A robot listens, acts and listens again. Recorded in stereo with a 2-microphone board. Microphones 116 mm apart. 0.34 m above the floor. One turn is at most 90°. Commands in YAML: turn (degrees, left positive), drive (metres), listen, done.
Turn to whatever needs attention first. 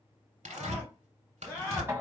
turn: 30
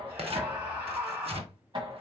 turn: -15
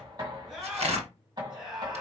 done: "Facing the scream."